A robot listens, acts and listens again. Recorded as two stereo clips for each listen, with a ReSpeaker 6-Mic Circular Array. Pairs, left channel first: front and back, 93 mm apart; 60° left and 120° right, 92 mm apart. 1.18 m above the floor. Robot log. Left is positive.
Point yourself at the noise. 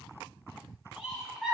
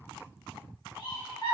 note: The laughter: 100° left.
cmd yaw +100
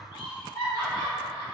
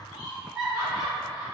note: The laughter is now 35° right.
cmd yaw -35
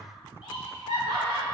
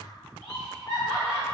end: Facing the laughter.